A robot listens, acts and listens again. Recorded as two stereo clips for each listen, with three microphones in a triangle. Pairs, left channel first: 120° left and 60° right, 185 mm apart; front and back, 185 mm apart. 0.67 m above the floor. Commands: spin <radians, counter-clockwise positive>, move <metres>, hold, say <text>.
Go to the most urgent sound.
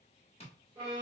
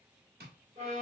hold
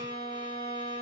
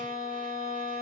hold
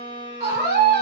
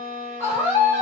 spin -1.31
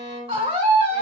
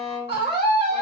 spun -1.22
move 1.0
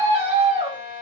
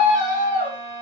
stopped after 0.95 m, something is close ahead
spin -0.26
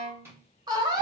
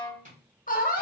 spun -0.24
say I am next to the scream.